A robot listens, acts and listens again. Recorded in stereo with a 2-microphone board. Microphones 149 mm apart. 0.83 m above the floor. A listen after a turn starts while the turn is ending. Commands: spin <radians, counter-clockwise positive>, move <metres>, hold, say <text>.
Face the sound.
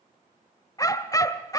spin 0.44
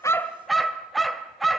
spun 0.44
say Facing the dog barking.